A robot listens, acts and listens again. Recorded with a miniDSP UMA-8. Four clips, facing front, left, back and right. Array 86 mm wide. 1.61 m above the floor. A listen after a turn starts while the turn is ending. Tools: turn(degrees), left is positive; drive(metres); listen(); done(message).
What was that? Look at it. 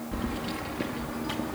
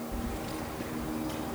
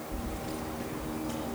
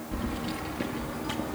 turn(degrees=-45)
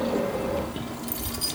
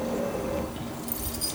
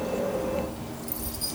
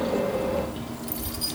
turn(degrees=-10)
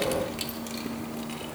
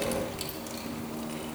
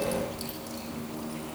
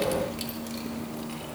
turn(degrees=-10)
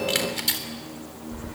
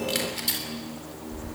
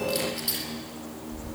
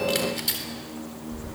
done("Found it: keys jangling, straight ahead, over 4 m away.")